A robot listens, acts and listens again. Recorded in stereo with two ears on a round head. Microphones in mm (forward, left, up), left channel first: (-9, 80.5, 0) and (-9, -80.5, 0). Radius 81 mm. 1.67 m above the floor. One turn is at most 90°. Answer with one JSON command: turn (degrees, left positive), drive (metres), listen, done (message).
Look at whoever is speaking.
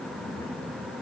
{"listen": true}
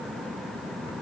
{"listen": true}
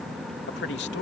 {"turn": 70}
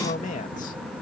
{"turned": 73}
{"turn": 40}
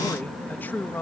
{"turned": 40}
{"turn": 10}
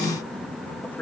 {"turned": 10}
{"listen": true}
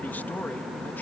{"listen": true}
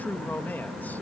{"turn": 10}
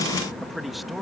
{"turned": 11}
{"done": "Found it: a man speaking, straight ahead."}